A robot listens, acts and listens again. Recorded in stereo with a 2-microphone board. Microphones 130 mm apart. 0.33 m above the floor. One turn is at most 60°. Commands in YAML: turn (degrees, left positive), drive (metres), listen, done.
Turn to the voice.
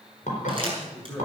turn: 20
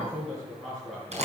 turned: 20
done: "Facing the man speaking, over 4 m away."